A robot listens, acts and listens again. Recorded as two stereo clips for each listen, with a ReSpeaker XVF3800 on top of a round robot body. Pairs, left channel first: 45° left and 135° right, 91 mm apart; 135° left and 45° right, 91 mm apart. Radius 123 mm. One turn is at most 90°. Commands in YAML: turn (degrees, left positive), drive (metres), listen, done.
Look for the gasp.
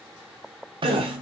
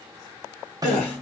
turn: -90
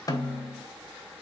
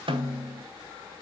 turn: -85
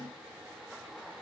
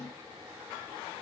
done: "Facing where the gasp came from. I can't hear it now."